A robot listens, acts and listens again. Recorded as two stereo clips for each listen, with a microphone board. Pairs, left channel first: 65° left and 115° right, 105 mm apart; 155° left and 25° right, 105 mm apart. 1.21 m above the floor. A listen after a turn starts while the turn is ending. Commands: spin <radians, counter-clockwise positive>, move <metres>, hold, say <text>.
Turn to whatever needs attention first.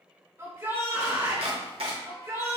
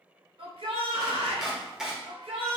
spin -0.87
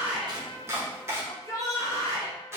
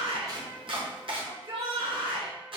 spin 0.17
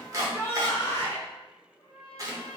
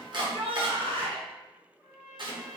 say Found it: a shout, straight ahead.